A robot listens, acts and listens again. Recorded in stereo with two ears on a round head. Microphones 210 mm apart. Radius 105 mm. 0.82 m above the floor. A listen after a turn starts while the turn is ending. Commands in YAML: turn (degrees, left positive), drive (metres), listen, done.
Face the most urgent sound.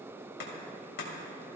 listen: true
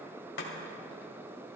listen: true
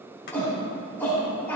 turn: 30
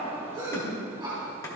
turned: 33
turn: -25
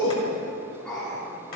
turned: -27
done: "Found it: a shout, straight ahead."